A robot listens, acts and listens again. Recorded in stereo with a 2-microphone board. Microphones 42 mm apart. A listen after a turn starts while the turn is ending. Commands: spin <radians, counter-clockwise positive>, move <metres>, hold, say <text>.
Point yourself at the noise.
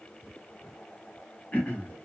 spin 0.61
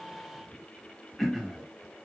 say Facing the throat clearing, 1 to 2 m away.